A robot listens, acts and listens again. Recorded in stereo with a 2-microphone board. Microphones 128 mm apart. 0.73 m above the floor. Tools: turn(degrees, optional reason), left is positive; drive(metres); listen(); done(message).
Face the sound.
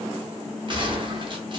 turn(degrees=-40, reason="The gunshot: about 40° right or 140° right.")
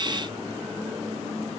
listen()
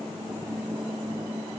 done("I heard a gunshot, but can't make it out now. It was about straight ahead or 100° right.")